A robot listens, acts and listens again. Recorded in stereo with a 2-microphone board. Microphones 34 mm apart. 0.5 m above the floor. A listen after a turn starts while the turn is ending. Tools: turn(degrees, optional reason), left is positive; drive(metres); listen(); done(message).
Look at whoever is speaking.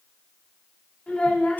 turn(degrees=50, reason="The child speaking: about 50° left or 130° left.")
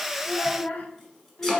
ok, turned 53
turn(degrees=65, reason="So it is at 65° left.")
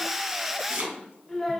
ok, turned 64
done("Facing the child speaking.")